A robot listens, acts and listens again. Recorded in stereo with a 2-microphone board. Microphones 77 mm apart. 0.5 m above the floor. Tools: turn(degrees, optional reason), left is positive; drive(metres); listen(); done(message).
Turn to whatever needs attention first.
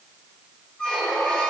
listen()
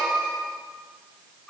listen()
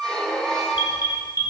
turn(degrees=70, reason="The alarm: about 70° left or 110° left.")
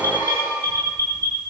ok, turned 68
turn(degrees=35, reason="So it is at 35° left.")
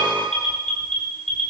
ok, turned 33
done("Facing the alarm.")